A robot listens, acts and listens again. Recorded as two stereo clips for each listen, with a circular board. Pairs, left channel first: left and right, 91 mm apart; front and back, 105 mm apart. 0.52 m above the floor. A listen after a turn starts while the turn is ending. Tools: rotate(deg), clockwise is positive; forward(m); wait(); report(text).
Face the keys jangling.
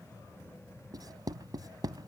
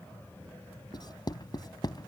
wait()
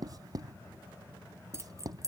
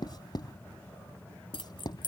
rotate(35)
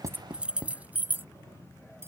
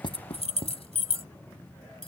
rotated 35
rotate(20)
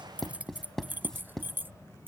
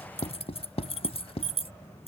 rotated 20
rotate(20)
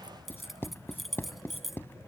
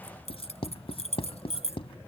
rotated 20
report("Found it: keys jangling, straight ahead.")